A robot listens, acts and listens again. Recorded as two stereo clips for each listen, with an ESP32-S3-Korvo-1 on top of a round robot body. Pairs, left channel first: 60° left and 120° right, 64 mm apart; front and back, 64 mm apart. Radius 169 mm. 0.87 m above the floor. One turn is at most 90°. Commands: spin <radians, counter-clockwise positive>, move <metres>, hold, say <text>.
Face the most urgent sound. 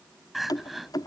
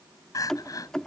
spin -0.52
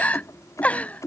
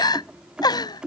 spin -0.26
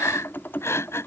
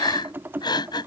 say Found it: crying, straight ahead.